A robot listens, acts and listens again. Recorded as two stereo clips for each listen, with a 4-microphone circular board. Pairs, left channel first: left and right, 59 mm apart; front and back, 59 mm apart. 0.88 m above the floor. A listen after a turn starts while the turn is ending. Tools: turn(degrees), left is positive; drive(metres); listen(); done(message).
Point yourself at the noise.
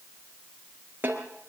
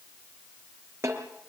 turn(degrees=-145)
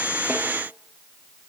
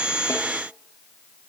listen()
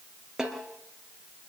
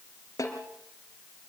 turn(degrees=-10)
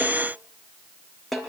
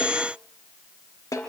done("Facing the snare drum, 2 to 4 m away.")